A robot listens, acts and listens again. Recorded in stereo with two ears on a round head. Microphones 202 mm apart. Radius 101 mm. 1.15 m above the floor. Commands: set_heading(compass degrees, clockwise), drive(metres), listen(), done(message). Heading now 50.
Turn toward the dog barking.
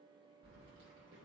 listen()
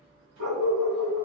set_heading(140)
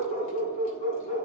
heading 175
set_heading(150)
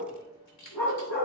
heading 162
set_heading(152)
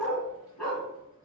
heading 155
done("Found it: a dog barking, straight ahead, 2 to 4 m away.")